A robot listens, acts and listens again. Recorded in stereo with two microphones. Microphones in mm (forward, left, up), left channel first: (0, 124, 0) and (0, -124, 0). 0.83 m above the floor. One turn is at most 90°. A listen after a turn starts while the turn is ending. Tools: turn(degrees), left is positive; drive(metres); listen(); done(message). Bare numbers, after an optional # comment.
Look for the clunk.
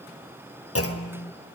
# The clunk: about 65° left or 115° left.
turn(65)
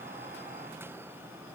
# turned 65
listen()
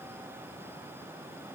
done("I heard a clunk, but can't make it out now. It was about straight ahead or 50° left.")